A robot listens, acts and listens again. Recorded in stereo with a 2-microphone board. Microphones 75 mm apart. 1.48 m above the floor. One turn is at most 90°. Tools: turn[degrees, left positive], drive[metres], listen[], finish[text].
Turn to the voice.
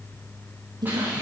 Thought: The woman speaking: about 70° right or 110° right.
Action: turn[-70]
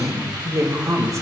Thought: So it is at 45° right.
Action: turn[-45]
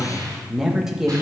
Thought: The woman speaking is now 10° right.
Action: turn[-10]
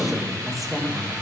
Action: finish[Found it: a woman speaking, straight ahead, 1 to 2 m away.]